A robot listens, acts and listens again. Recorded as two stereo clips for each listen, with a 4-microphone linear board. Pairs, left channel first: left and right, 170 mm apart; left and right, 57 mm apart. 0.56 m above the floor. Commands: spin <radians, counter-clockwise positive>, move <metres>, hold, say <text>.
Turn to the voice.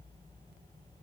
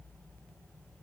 hold
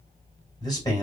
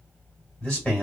spin 0.44
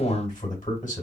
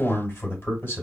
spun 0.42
spin 2.27
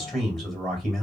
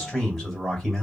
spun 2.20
say Facing the man speaking, 2 to 4 m away.